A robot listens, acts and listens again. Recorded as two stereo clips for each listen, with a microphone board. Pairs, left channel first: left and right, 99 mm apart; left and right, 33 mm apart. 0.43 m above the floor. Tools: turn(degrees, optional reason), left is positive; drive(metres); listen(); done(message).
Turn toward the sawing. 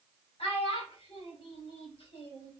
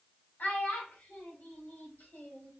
listen()
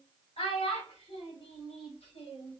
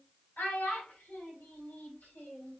listen()
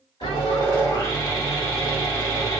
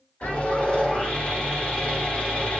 turn(degrees=45, reason="The sawing: about 45° left or 135° left.")
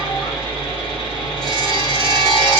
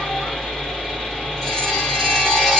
turn(degrees=10, reason="So it is at 10° left.")
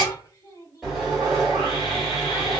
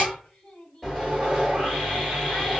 done("Found it: sawing, straight ahead, 1 to 2 m away.")